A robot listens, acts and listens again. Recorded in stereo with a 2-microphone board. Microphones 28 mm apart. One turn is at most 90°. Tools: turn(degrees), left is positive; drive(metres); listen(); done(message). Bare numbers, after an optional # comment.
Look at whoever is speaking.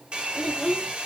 turn(30)
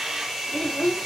# So it is at 140° left.
turn(90)
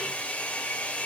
# Nothing new. It was at 50° left.
turn(50)
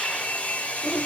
# The child speaking is now 15° left.
turn(15)
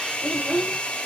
done("Found it: a child speaking, straight ahead.")